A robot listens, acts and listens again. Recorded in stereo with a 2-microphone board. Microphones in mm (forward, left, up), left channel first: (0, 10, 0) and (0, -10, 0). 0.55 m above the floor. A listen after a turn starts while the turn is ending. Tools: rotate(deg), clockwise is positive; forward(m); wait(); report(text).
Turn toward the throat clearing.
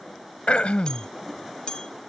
rotate(-90)
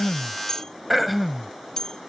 report("Found it: throat clearing, straight ahead.")